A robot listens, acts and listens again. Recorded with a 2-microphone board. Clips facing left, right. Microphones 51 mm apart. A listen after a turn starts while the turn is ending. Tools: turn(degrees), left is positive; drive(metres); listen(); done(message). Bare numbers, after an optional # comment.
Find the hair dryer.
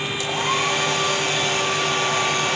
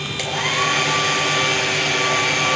turn(-90)
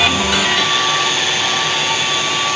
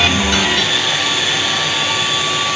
done("Found it: a hair dryer, straight ahead, over 4 m away.")